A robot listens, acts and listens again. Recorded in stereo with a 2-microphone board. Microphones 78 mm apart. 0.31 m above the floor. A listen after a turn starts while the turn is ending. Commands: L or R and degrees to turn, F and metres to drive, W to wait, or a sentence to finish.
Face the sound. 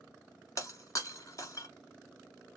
L45
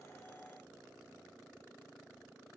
W
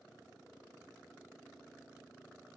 I heard breaking glass, but can't make it out now. It was about straight ahead or 90° left.